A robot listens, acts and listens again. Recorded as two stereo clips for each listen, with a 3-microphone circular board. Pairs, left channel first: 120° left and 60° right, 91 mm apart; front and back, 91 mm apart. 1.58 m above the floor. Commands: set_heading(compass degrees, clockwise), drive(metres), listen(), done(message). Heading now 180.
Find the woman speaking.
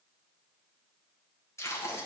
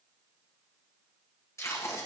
listen()
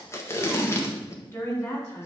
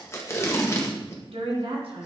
set_heading(5)
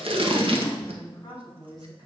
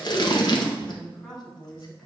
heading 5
set_heading(295)
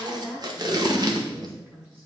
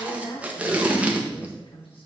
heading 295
set_heading(285)
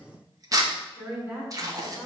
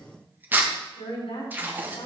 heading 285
done("Facing the woman speaking.")